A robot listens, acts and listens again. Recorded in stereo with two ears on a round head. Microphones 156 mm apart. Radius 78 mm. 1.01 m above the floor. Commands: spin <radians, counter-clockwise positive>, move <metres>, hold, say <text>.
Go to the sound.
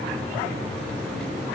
hold
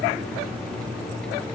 hold
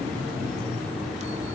say I can't make out anything.